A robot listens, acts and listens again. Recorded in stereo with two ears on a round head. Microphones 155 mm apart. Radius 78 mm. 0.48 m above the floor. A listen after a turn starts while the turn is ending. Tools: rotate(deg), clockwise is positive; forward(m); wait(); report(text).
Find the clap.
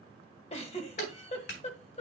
rotate(-65)
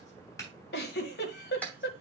rotate(-10)
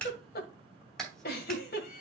report("Found it: a clap, straight ahead, 2 to 4 m away.")